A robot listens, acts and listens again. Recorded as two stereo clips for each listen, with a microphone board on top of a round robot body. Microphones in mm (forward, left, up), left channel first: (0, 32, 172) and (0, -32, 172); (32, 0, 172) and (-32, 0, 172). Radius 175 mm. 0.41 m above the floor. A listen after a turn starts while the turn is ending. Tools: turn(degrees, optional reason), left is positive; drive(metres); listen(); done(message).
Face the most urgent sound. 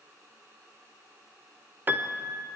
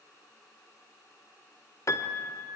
listen()
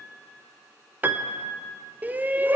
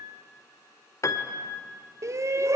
turn(degrees=-150, reason="The shout: 150° right.")
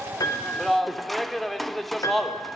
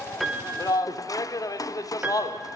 done("Found it: a shout, straight ahead, 1 to 2 m away.")